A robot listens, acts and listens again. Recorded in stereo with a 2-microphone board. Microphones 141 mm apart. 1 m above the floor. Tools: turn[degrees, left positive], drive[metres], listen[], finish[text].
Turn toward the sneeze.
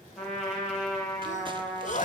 Thought: The sneeze: about 60° left or 120° left.
Action: turn[60]
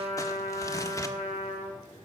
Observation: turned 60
Action: listen[]
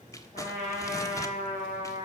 Action: finish[I heard a sneeze, but can't make it out now. It was about straight ahead or 60° left.]